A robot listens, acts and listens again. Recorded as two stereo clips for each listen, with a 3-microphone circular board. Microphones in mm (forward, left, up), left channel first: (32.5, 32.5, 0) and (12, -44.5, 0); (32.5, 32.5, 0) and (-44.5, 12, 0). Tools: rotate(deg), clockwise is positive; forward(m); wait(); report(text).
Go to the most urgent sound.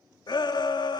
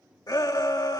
rotate(-50)
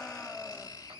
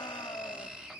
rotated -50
forward(1.0)
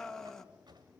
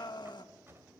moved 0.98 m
rotate(10)
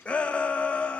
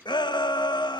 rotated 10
forward(1.0)
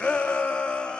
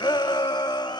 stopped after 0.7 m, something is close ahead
report("I am next to the shout.")